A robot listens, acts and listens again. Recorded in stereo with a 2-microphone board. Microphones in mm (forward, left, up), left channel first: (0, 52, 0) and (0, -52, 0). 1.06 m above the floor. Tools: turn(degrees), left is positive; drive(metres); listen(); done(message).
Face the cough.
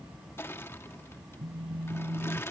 listen()
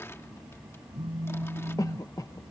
turn(degrees=35)
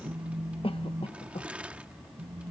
turn(degrees=110)
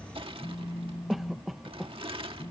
done("Facing the cough.")